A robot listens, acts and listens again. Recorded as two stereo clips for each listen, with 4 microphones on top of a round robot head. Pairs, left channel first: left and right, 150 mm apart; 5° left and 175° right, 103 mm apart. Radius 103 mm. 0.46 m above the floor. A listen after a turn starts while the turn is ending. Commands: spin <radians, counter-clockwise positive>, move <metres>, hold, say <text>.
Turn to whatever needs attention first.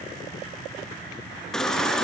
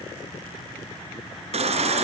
spin 3.05
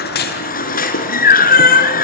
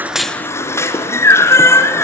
spin 1.22
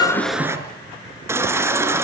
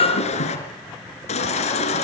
spin -0.35
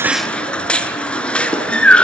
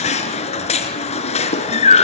say Facing the baby crying.